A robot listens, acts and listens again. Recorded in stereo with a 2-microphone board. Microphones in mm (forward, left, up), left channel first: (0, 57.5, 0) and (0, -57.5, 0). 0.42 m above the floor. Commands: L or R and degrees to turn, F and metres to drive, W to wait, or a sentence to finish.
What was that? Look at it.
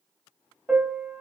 R30
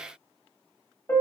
L20
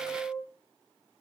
Facing the piano.